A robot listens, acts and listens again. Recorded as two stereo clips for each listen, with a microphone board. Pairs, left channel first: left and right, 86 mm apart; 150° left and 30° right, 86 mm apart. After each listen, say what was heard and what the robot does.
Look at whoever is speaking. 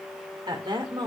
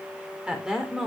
The woman speaking: 115° right. Turn 115° right.
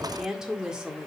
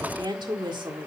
The woman speaking is now 10° right. Turn 10° right.
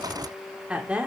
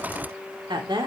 The woman speaking is now 15° right. Turn 15° right.
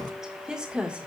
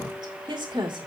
The woman speaking is now 10° right. Turn 10° right.
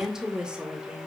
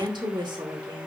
The woman speaking is now 10° right. Turn 10° right.
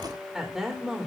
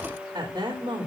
Found it: a woman speaking, straight ahead.